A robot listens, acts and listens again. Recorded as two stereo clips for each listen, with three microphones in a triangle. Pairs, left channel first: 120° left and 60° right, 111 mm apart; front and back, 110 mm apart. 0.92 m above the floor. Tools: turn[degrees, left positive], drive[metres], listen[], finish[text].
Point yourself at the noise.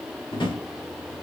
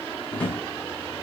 Thought: The drawer: 80° left.
Action: turn[80]
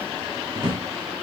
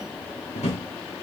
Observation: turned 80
Thought: The drawer is now 15° right.
Action: turn[-15]
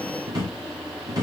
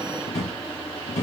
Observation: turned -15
Action: finish[Found it: a drawer, straight ahead.]